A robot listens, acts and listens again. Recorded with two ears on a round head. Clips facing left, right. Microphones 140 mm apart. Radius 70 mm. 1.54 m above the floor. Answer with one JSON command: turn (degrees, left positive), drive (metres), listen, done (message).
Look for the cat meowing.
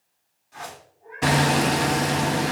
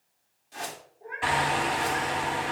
{"turn": -75}
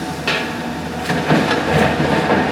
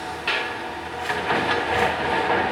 {"listen": true}
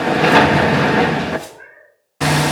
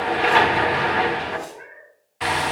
{"done": "Facing the cat meowing, over 4 m away."}